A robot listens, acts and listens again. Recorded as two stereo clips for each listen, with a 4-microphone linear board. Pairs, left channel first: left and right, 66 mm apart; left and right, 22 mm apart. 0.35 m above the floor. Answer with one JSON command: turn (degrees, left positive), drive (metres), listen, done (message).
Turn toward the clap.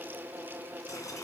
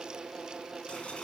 {"listen": true}
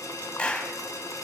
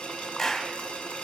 {"turn": 15}
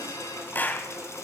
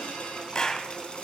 {"turn": 150}
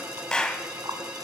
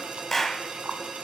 {"turn": 15}
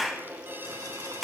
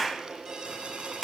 {"done": "Found it: a clap, straight ahead, 1 to 2 m away."}